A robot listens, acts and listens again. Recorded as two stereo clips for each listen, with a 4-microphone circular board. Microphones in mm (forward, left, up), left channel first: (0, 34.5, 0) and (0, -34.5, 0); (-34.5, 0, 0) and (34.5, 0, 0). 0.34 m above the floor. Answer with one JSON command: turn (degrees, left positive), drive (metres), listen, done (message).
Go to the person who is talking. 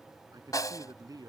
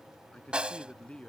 {"turn": -105}
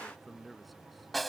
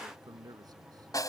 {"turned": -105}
{"drive": 1.0}
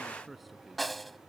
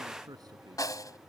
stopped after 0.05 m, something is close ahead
{"done": "Blocked. The man speaking is further on, straight ahead."}